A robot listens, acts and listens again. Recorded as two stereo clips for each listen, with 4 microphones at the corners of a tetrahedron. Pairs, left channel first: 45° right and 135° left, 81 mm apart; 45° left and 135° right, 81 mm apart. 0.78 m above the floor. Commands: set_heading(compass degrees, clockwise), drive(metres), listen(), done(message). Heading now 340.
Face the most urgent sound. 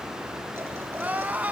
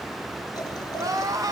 set_heading(140)
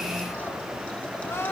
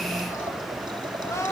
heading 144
set_heading(134)
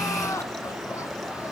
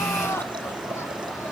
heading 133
done("Facing the crying.")